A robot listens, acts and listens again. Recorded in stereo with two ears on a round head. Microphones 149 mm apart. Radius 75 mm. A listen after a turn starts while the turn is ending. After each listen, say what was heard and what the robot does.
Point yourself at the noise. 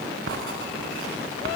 Turn 90° right.
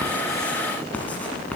So it is at 10° left. Turn 10° left.
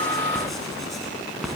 Facing the writing.